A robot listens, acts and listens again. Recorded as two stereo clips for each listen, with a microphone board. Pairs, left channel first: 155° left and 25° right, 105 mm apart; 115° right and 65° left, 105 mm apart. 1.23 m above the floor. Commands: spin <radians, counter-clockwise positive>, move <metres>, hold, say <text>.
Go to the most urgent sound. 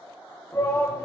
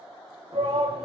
spin 1.57
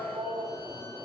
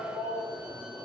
spin 0.61
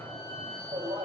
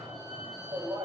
move 1.0
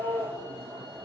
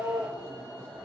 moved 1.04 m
move 1.0
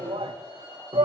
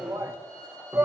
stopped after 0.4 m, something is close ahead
say I am next to the shout.